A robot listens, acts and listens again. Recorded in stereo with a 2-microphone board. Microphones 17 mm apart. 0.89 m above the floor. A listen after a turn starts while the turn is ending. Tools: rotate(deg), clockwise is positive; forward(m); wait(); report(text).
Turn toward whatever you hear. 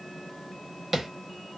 rotate(25)
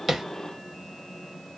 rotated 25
wait()
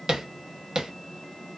rotate(130)
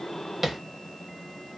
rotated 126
wait()
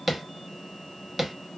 report("Found it: tapping, straight ahead.")